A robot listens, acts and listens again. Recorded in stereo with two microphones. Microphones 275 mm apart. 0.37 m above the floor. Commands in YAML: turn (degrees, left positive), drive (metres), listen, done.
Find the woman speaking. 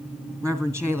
turn: 30
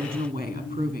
turn: -20
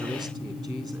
listen: true
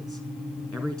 done: "Found it: a woman speaking, straight ahead, 2 to 4 m away."